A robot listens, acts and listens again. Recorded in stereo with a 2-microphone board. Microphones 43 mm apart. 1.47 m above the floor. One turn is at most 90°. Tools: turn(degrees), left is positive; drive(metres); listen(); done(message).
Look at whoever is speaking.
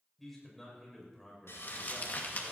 turn(degrees=30)
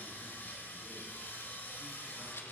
listen()
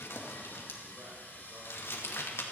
listen()
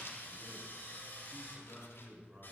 turn(degrees=-25)
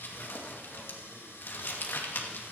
listen()
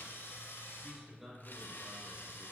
done("Facing the man speaking.")